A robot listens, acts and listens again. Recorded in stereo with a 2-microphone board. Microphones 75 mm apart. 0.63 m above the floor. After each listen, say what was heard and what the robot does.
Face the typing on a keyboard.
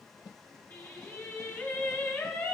Keep listening.
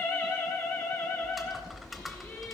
Turn 30° left.
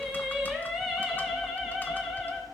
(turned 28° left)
Keep listening.
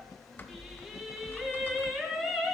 So it is at 155° left. Turn 155° left.
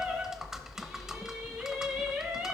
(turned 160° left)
Facing the typing on a keyboard, under 1 m away.